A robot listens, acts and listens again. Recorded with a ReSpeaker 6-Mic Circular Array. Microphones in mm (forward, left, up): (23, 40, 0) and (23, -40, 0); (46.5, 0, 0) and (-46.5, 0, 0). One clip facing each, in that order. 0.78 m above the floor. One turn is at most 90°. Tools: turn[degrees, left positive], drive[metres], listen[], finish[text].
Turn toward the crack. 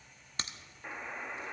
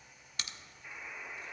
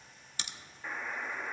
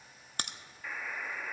Thought: The crack: 145° left.
Action: turn[90]
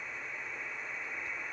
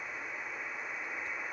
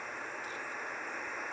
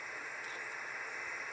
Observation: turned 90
Thought: Nothing new. It was at 55° left.
Action: turn[55]
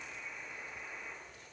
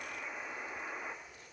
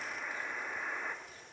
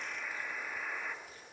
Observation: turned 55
Action: finish[Facing where the crack came from. I can't hear it now.]